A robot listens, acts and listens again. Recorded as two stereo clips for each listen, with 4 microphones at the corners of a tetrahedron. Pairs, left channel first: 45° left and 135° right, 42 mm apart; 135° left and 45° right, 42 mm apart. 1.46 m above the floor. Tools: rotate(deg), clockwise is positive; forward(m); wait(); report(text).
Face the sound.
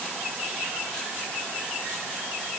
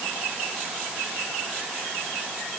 wait()
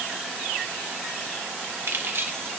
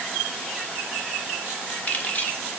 rotate(170)
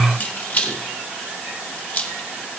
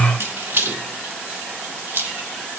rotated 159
rotate(10)
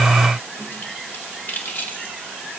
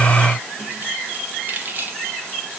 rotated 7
report("Facing the keys jangling.")